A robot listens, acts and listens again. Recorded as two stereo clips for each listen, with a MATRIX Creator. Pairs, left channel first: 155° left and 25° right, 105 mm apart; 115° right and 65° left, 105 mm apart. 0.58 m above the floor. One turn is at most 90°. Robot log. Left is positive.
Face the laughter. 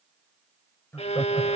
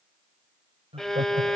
note: The laughter: 90° left.
cmd yaw +90
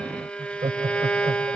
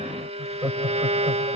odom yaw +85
end: Found it: laughter, straight ahead, 2 to 4 m away.